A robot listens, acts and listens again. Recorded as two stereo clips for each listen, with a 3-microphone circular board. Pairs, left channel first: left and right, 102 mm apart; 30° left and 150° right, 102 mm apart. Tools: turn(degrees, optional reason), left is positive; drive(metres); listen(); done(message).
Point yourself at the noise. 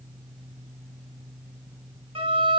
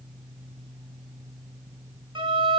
turn(degrees=-115, reason="The violin: 115° right.")
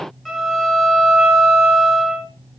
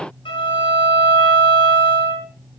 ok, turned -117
done("Found it: a violin, straight ahead.")